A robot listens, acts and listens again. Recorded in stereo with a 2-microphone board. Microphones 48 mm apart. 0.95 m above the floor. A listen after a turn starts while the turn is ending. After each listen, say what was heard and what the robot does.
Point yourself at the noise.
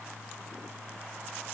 Keep listening.
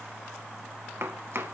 The chopping: about 55° right or 125° right. Turn 55° right.
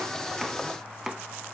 Found it: chopping, straight ahead.